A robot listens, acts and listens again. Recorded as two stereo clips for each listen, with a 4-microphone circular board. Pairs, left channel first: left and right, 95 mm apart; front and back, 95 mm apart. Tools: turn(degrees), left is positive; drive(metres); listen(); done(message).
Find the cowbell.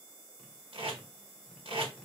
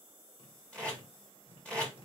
listen()
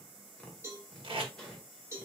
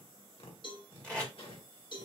turn(degrees=-30)
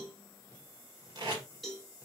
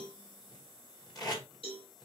done("Facing the cowbell.")